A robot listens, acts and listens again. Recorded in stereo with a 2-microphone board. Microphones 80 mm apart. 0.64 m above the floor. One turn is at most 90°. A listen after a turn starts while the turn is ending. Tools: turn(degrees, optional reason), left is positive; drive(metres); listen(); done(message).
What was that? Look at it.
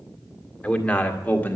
turn(degrees=20, reason="The man speaking: about 20° left or 160° left.")
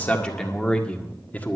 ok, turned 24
turn(degrees=20, reason="The man speaking: about 20° left or 160° left.")
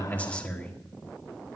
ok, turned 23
turn(degrees=20, reason="The man speaking: about 20° left or 160° left.")
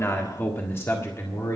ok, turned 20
turn(degrees=40, reason="The man speaking: about 40° left or 140° left.")
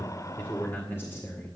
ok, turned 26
turn(degrees=30, reason="The man speaking: about 30° left or 150° left.")
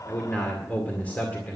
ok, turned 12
turn(degrees=20, reason="The man speaking: about 20° left or 160° left.")
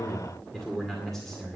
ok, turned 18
turn(degrees=30)
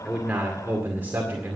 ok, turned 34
turn(degrees=-25, reason="So it is at 25° right.")
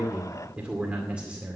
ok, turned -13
turn(degrees=-15, reason="The man speaking is now 15° right.")
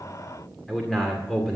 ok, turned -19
done("Facing the man speaking.")